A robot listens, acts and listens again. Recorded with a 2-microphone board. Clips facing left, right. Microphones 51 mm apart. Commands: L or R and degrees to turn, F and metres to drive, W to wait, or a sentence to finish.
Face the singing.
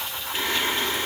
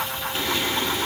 L35
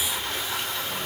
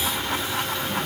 W
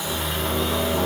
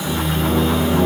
Facing the singing, over 4 m away.